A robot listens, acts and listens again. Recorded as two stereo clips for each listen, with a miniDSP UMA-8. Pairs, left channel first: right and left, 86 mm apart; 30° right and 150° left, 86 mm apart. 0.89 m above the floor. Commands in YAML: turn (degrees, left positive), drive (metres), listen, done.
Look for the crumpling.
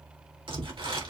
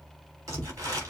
turn: 100
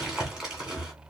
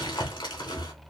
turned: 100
turn: 10
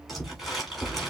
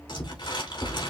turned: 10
done: "Facing the crumpling."